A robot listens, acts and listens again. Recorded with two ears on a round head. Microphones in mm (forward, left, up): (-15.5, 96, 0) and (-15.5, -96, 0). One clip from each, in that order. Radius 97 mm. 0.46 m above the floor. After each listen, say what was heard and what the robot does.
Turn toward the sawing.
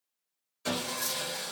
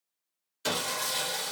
The sawing: about 50° right or 130° right. Turn 50° right.
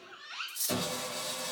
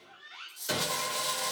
So it is at 65° right. Turn 65° right.
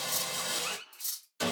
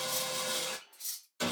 The sawing is now 10° left. Turn 10° left.
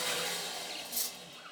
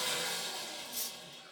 Facing the sawing.